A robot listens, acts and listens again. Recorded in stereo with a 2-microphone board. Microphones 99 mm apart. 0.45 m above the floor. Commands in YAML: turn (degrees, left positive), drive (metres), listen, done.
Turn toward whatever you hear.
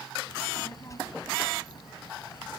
turn: 45
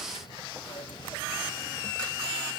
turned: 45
turn: 50
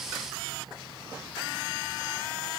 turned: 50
turn: -55
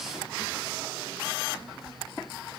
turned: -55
turn: -15
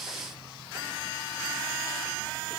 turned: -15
listen: true
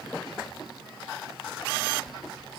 done: "Found it: a child speaking, straight ahead."